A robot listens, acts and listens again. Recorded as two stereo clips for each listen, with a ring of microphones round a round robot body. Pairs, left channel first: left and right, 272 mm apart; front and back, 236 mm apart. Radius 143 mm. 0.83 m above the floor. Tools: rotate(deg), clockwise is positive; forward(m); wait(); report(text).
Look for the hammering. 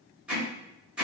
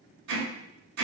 rotate(175)
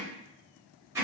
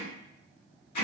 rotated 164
rotate(10)
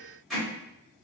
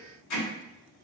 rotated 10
report("Facing the hammering, 1 to 2 m away.")